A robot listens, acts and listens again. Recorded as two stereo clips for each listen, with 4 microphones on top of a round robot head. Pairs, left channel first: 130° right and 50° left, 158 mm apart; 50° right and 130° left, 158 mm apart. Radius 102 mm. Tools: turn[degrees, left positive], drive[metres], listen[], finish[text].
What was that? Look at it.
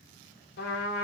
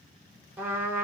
Thought: The trumpet: 150° right.
Action: turn[-150]
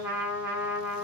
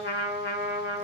Thought: The trumpet is now 35° right.
Action: turn[-35]
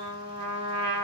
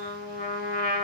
Thought: The trumpet is now 10° right.
Action: turn[-10]
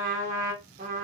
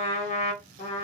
Action: finish[Found it: a trumpet, straight ahead.]